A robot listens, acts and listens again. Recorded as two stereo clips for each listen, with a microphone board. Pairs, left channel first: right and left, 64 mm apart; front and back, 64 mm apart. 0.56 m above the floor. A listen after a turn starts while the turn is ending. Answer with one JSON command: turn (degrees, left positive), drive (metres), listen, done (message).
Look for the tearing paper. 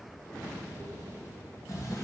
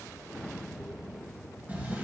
{"listen": true}
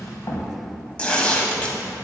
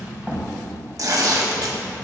{"turn": -160}
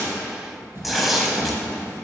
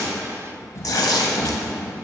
{"done": "Found it: tearing paper, straight ahead, under 1 m away."}